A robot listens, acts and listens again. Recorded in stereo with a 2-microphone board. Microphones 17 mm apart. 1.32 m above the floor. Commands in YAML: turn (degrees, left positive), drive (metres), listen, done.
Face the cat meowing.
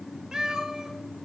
turn: -55
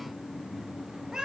turn: -45
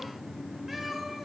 done: "Facing the cat meowing, 2 to 4 m away."